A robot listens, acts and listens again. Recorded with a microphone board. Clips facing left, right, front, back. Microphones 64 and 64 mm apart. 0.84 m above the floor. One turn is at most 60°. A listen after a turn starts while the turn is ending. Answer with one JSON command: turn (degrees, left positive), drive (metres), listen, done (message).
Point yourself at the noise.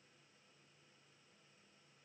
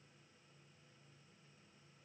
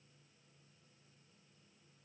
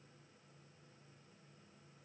{"listen": true}
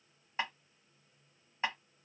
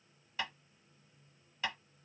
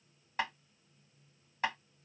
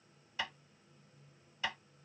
{"turn": 35}
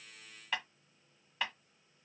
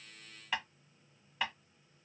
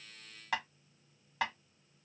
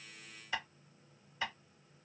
{"done": "Found it: tapping, straight ahead."}